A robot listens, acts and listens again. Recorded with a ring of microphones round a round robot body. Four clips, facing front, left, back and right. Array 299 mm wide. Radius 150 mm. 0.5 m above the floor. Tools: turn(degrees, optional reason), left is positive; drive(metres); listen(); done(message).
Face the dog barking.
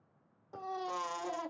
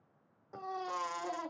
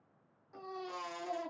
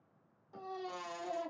listen()
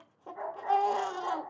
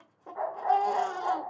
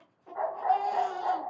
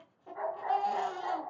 turn(degrees=145, reason="The dog barking: 145° left.")
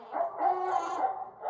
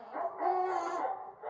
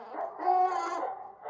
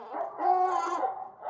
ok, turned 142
turn(degrees=-30, reason="The dog barking is now 30° right.")
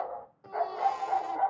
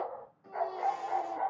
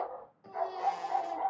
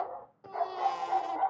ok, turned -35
turn(degrees=-15, reason="The dog barking is now 15° right.")
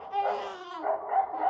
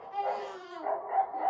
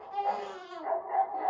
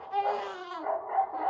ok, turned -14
done("Facing the dog barking, 1 to 2 m away.")